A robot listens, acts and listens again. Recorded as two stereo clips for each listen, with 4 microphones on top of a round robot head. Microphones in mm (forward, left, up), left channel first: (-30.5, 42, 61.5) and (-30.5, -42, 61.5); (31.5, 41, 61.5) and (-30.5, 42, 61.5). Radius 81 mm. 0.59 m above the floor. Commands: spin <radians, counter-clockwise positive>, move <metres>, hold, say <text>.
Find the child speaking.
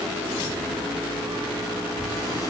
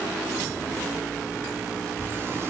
spin 1.13
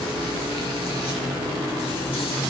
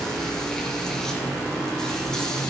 hold
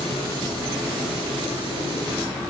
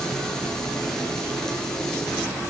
hold
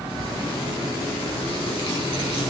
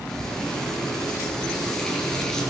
spin -0.35
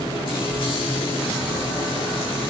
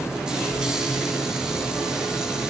hold
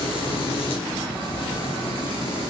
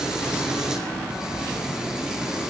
say Facing the child speaking, over 4 m away.